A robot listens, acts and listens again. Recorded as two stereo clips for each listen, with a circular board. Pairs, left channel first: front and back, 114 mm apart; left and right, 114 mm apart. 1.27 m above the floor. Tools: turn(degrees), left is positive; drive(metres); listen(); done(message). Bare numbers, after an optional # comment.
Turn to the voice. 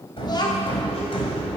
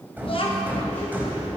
# The child speaking: 50° left.
turn(50)
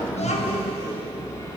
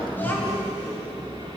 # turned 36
# The child speaking is now 15° left.
turn(15)
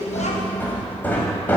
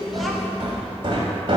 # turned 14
done("Found it: a child speaking, straight ahead.")